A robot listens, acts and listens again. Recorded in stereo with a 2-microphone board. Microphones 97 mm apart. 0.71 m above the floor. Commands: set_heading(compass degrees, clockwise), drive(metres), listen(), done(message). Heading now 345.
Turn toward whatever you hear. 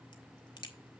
set_heading(300)
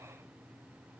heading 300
listen()
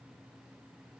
done("I heard a crack, but can't make it out now. It was about straight ahead or 90° left.")